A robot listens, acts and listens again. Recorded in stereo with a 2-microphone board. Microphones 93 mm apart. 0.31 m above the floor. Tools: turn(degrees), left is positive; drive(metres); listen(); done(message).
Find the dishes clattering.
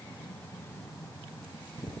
listen()
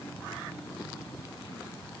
listen()
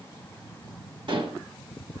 turn(degrees=-60)
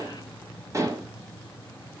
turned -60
turn(degrees=-40)
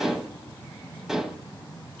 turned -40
done("Found it: dishes clattering, straight ahead, 1 to 2 m away.")